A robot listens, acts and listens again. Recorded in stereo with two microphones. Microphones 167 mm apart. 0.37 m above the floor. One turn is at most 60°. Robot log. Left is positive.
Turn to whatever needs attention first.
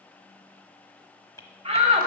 note: The shout: about 40° right or 140° right.
cmd yaw -40
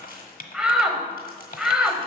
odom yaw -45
end: Facing the shout, 1 to 2 m away.